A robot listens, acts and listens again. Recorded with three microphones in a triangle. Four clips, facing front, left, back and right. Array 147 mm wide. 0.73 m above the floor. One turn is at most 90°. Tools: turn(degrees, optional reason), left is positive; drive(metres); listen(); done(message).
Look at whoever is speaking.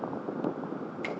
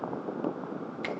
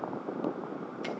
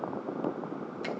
listen()
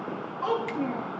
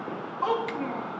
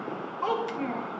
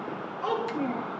turn(degrees=90, reason="The child speaking: 100° left.")
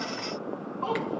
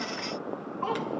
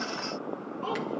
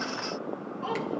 turn(degrees=40, reason="The child speaking is now 40° left.")
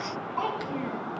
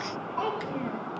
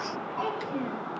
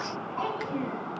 done("Found it: a child speaking, straight ahead, over 4 m away.")